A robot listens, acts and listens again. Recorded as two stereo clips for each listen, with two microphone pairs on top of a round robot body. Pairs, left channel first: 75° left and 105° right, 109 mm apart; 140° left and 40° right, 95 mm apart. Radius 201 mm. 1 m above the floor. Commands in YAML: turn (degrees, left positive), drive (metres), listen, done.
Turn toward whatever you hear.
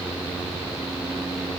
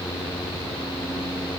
listen: true
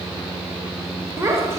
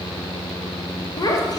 turn: -170
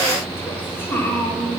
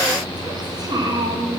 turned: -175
done: "Facing the child speaking."